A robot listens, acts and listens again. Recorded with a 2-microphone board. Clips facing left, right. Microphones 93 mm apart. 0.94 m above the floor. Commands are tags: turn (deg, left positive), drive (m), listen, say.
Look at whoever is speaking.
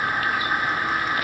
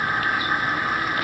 <listen/>
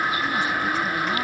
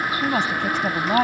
<turn deg="-70"/>
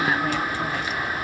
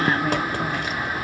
<listen/>
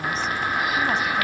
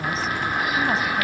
<listen/>
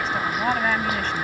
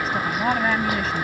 <say>Facing the woman speaking.</say>